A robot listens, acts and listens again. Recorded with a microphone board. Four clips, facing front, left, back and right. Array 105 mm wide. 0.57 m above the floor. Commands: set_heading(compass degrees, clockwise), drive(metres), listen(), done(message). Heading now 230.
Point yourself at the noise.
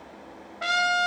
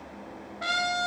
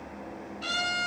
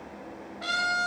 set_heading(215)
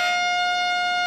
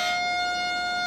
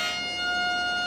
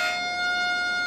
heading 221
done("Facing the trumpet, 2 to 4 m away.")